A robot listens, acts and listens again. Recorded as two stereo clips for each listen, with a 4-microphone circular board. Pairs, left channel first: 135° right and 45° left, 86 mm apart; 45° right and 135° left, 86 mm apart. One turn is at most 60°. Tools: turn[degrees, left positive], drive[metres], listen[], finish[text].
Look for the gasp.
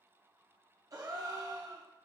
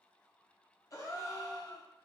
Action: finish[Facing the gasp.]